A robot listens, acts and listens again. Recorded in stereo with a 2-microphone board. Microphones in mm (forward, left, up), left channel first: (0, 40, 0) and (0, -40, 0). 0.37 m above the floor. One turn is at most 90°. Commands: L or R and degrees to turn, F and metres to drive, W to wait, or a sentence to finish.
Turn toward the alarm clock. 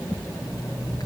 R90
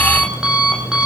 R10
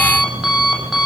Facing the alarm clock, over 4 m away.